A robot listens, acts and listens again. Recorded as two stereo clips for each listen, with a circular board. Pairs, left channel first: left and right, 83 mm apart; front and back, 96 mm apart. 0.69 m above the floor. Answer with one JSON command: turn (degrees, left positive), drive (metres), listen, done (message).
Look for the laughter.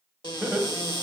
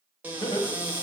{"turn": -25}
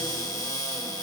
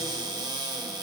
{"listen": true}
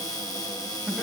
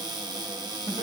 {"listen": true}
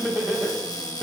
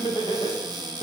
{"done": "Found it: laughter, straight ahead, 1 to 2 m away."}